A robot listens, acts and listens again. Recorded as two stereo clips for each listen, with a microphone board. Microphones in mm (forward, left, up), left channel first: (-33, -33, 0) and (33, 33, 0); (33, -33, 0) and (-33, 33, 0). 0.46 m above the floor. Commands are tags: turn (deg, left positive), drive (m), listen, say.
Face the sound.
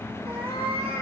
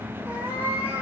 <turn deg="65"/>
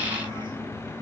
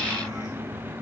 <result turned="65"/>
<listen/>
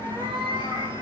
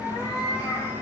<turn deg="20"/>
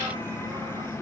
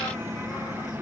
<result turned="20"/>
<listen/>
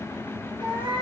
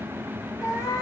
<turn deg="10"/>
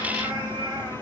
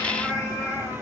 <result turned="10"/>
<say>Found it: a cat meowing, straight ahead.</say>